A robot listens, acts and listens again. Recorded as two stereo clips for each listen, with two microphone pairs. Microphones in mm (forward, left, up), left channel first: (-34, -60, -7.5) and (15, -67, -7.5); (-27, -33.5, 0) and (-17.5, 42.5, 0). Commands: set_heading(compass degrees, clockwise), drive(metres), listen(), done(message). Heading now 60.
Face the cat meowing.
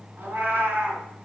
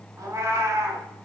set_heading(30)
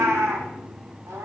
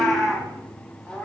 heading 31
set_heading(56)
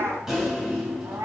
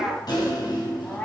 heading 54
set_heading(79)
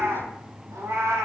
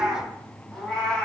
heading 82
set_heading(97)
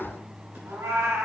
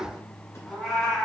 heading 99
set_heading(109)
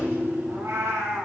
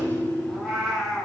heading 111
done("Found it: a cat meowing, straight ahead.")